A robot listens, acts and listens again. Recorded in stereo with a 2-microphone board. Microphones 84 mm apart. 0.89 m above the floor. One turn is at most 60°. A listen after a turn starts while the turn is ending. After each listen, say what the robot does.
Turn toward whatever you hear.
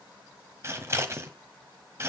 Turn 30° right.
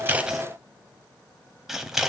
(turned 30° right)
Facing the scissors, 1 to 2 m away.